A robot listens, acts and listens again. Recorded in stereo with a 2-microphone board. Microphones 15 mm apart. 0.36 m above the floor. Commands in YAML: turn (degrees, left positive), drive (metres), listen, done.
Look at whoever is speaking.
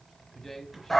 turn: 20
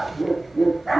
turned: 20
listen: true
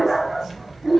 listen: true
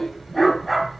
done: "I heard a man speaking, but can't make it out now. It was about straight ahead or 140° left."